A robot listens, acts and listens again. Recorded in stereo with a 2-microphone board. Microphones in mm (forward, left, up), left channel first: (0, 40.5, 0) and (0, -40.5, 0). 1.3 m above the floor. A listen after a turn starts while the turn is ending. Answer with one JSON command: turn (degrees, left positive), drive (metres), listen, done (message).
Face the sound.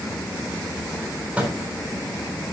{"turn": -20}
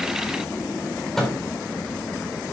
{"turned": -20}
{"done": "Found it: a microwave, straight ahead, over 4 m away."}